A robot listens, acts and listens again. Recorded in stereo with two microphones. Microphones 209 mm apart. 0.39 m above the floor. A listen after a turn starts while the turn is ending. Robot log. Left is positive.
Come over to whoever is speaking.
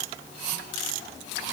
cmd idle
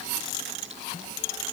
cmd idle
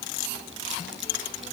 end: I can't make out anyone speaking.